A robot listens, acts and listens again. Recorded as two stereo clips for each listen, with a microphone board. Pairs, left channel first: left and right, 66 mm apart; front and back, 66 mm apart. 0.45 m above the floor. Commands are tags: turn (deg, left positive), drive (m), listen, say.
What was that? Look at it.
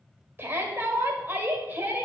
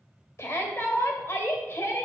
<turn deg="-35"/>
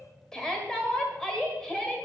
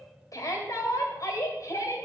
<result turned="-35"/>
<turn deg="10"/>
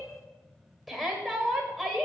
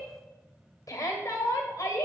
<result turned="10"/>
<say>Facing the shout, 1 to 2 m away.</say>